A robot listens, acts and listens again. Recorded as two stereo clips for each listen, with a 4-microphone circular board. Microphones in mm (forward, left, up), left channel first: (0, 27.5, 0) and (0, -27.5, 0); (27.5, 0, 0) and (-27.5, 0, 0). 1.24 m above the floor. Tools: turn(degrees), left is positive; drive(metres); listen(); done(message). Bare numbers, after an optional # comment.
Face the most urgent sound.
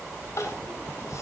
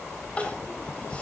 # The crying: 70° left.
turn(70)
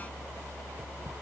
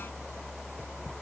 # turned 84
# Nothing new. It was at 15° right.
turn(-15)
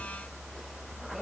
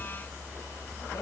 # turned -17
listen()
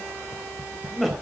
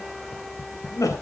done("Found it: crying, straight ahead.")